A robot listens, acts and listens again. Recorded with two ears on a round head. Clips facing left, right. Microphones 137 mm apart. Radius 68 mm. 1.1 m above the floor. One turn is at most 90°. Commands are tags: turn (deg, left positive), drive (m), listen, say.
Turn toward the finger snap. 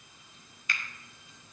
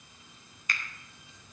<turn deg="-35"/>
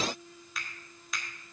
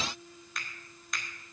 <say>Found it: a finger snap, straight ahead.</say>